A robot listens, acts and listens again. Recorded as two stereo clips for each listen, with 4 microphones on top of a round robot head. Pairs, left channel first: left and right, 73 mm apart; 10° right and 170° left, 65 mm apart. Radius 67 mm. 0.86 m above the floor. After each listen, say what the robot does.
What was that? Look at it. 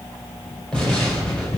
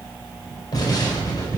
Turn 10° left.
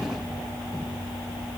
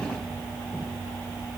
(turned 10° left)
I heard an explosion from this way, but can't make it out now.